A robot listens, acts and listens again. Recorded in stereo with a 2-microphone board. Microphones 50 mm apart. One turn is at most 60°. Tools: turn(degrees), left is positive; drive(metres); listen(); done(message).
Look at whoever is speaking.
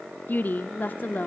turn(degrees=40)
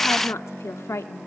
turn(degrees=60)
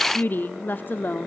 turn(degrees=45)
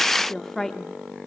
turn(degrees=10)
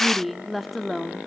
done("Facing the woman speaking.")